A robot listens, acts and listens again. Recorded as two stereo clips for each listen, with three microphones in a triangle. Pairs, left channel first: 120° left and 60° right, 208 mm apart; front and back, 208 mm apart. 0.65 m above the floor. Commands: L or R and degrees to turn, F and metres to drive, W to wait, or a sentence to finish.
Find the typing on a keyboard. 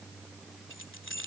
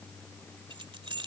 W
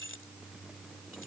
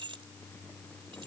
W
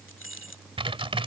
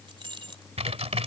R120
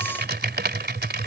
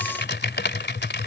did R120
R25
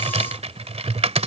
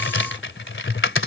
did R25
Found it: typing on a keyboard, straight ahead.